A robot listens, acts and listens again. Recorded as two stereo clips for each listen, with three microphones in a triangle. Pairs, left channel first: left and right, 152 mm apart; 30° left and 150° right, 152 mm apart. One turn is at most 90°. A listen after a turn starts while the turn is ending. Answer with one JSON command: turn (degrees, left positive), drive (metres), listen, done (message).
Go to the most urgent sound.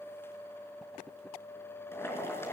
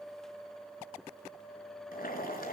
{"listen": true}
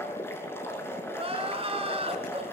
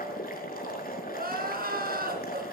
{"turn": -90}
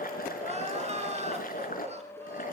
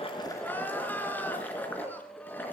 {"turn": -50}
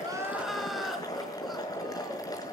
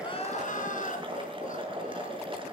{"drive": 1.0}
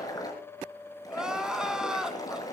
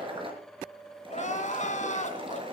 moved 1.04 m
{"drive": 1.0}
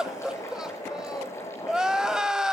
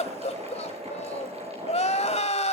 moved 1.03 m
{"drive": 1.0}
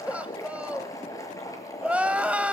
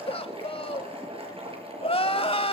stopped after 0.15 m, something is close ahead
{"turn": -10}
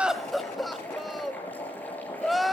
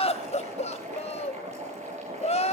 {"done": "I am next to the crying."}